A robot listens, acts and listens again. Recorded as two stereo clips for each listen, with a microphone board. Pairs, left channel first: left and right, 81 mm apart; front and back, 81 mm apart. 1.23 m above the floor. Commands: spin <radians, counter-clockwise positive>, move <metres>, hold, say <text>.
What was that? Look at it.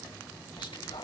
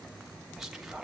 spin 1.75
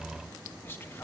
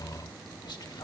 spin 0.52
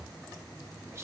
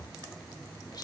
hold
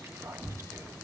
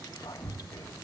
spin -0.61
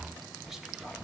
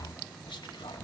say Facing the whispering, 1 to 2 m away.